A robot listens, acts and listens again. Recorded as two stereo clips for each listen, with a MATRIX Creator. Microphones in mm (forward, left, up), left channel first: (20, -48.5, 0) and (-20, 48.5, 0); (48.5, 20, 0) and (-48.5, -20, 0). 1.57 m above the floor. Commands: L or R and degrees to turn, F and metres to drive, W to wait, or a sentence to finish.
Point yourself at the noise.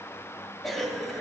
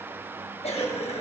L20
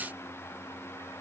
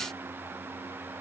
W
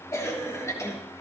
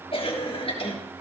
Facing the cough, 2 to 4 m away.